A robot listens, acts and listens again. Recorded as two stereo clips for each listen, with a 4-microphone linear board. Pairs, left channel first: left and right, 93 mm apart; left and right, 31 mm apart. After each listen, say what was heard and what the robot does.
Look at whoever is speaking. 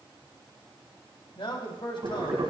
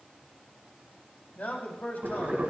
The man speaking: about 65° left or 115° left. Turn 65° left.
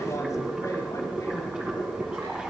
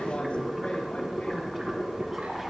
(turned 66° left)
Keep listening.
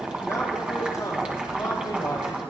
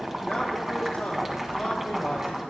Keep listening.
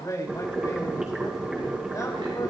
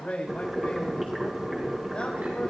So it is at 40° left. Turn 40° left.
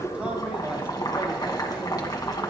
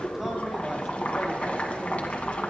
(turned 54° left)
Nothing new. It was at 15° right. Turn 15° right.
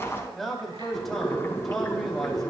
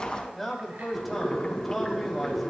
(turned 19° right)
Facing the man speaking.